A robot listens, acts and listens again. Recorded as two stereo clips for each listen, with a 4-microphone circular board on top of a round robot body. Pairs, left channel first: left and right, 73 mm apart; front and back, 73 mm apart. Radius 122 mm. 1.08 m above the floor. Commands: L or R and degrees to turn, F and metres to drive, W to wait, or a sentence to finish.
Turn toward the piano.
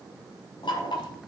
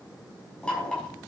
W
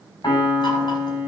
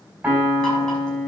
L110
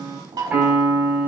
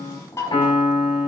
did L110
R20
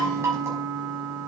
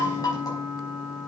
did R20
Found it: a piano, straight ahead.